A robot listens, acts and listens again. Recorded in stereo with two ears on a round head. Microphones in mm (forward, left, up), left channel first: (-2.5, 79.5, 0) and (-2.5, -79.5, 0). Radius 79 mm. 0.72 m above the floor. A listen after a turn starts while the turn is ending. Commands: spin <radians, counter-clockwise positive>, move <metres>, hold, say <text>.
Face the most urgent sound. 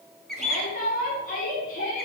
spin 0.87
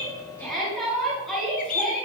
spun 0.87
say Facing the shout.